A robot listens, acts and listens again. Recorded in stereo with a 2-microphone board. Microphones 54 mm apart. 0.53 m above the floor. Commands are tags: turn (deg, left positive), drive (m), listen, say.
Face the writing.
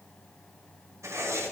<turn deg="-75"/>
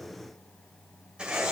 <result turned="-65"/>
<turn deg="-20"/>
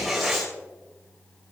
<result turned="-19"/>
<say>Facing the writing.</say>